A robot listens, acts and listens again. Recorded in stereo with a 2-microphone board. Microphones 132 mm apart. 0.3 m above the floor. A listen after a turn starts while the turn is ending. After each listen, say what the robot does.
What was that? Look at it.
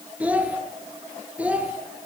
Turn 30° right.
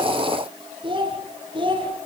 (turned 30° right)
Turn 145° right.
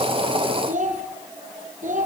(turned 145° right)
Turn 65° right.
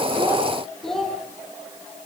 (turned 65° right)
Found it: a child speaking, straight ahead, over 4 m away.